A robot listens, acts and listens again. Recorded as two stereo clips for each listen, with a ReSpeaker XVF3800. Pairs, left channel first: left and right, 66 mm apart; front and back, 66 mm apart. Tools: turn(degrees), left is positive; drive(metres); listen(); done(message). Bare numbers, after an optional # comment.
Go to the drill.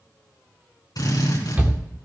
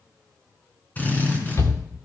# The drill: 65° left.
turn(65)
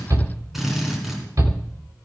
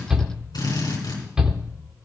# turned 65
drive(1.0)
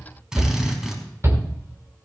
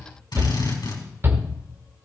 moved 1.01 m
# The drill is now 10° right.
turn(-10)
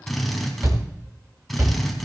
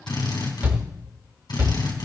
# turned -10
drive(1.0)
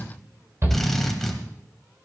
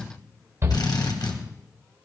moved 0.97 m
drive(1.0)
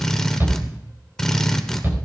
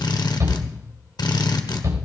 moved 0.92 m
drive(1.0)
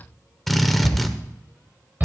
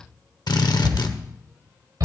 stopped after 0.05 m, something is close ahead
done("Arrived at the drill, straight ahead.")